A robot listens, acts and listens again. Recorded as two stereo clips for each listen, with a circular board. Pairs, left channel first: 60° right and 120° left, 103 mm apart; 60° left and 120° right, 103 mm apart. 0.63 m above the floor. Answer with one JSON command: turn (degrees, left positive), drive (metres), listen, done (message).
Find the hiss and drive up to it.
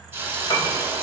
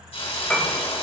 {"turn": 55}
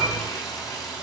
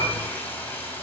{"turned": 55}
{"turn": -10}
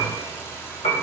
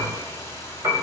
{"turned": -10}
{"drive": 1.0}
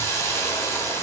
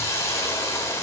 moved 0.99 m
{"drive": 1.0}
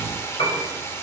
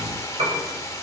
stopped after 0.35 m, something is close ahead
{"done": "I am next to the hiss."}